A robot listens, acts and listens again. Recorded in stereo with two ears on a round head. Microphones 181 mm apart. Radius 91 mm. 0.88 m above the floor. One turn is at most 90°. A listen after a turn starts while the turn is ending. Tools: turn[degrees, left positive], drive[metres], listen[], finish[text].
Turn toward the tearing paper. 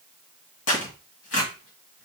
Thought: The tearing paper: about 65° left or 115° left.
Action: turn[65]
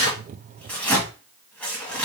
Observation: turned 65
Action: finish[Found it: tearing paper, straight ahead.]